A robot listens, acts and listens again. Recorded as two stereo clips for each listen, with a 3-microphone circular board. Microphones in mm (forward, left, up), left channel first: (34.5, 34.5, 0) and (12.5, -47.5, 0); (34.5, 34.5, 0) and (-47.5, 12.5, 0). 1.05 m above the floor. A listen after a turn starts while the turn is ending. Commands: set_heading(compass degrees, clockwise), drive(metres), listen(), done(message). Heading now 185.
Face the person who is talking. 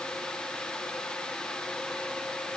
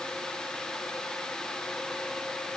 listen()
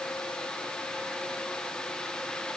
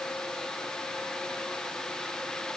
listen()
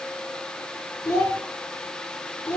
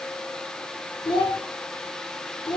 set_heading(150)
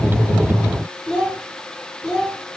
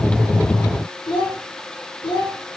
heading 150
done("Found it: a child speaking, straight ahead.")